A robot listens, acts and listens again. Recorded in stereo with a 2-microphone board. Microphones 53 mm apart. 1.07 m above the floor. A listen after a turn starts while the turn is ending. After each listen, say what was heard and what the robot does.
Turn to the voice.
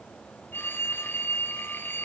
Keep listening.
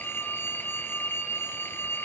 Keep listening.
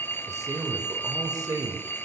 Turn 90° right.
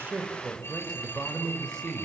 So it is at 15° left. Turn 15° left.
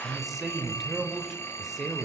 Facing the man speaking, over 4 m away.